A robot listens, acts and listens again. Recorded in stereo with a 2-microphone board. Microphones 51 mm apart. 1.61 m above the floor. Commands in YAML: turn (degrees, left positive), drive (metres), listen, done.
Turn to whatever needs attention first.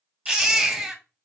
turn: -30
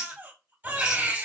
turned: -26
turn: -140
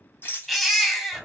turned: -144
done: "Found it: a baby crying, straight ahead."